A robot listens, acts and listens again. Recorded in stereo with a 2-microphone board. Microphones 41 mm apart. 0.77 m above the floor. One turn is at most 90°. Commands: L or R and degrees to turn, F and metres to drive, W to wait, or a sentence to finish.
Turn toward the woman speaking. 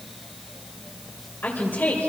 L55
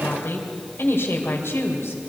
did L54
L75
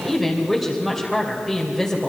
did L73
Facing the woman speaking.